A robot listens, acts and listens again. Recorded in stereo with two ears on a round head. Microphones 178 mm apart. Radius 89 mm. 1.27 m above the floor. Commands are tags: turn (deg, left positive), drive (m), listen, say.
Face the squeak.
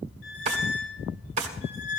<turn deg="65"/>
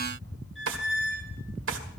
<say>Found it: a squeak, straight ahead.</say>